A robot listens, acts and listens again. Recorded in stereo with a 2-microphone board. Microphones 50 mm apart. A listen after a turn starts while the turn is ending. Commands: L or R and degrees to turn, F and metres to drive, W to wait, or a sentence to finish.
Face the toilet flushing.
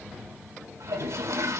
R75
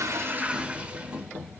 R25
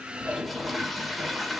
Facing the toilet flushing, 1 to 2 m away.